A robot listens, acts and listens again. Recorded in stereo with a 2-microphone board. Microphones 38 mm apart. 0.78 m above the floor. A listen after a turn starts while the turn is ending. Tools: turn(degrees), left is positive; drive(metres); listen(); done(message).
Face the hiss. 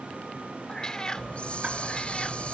turn(degrees=35)
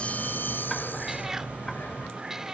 turn(degrees=115)
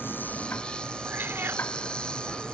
turn(degrees=25)
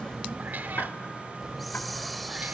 done("Facing the hiss.")